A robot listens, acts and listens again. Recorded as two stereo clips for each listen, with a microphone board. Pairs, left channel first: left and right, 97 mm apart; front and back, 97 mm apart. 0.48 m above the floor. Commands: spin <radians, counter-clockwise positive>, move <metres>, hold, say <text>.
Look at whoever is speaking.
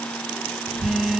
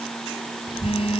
spin 0.70
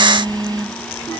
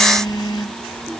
hold
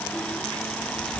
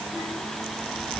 say Facing the child speaking.